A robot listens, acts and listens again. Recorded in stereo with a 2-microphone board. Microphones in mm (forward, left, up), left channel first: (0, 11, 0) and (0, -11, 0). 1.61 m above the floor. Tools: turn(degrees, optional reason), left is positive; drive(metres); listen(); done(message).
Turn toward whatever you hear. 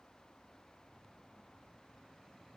listen()
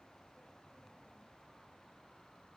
listen()
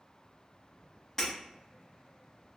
turn(degrees=20, reason="The breaking glass: about 20° left or 160° left.")
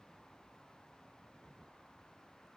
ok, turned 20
listen()
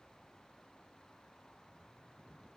done("I heard breaking glass, but can't make it out now. It was about straight ahead or 140° left.")